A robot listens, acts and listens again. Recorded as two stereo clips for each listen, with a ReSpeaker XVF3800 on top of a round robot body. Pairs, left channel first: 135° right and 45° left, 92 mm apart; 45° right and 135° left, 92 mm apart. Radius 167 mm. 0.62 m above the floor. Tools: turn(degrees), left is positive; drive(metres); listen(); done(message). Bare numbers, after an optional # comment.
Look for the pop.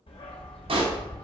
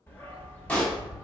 # The pop: 30° left.
turn(30)
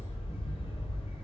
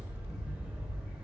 done("I heard a pop from this way, but can't make it out now.")